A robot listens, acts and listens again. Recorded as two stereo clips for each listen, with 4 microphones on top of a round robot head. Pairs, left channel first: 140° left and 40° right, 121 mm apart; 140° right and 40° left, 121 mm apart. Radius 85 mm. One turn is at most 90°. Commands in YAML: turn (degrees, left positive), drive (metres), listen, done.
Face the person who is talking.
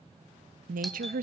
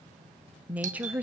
turn: -40
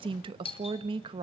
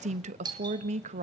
turn: 10
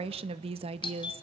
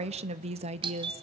done: "Facing the woman speaking."